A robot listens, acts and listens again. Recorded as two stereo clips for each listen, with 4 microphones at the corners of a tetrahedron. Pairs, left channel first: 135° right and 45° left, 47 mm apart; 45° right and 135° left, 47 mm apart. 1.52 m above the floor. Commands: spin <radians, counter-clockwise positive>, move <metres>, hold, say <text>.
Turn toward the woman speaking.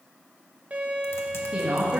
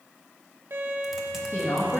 spin -0.35
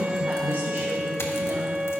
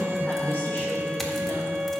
say Found it: a woman speaking, straight ahead.